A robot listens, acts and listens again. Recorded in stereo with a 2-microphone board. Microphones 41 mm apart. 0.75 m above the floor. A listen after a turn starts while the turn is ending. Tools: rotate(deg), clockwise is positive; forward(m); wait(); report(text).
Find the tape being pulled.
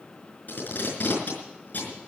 rotate(-50)
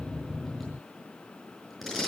report("Facing the tape being pulled, over 4 m away.")